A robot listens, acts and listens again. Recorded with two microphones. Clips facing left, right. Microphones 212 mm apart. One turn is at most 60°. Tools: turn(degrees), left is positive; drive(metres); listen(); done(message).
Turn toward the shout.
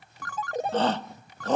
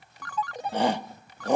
turn(degrees=-30)
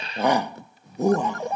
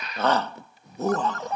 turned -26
turn(degrees=15)
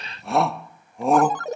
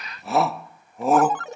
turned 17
done("Facing the shout.")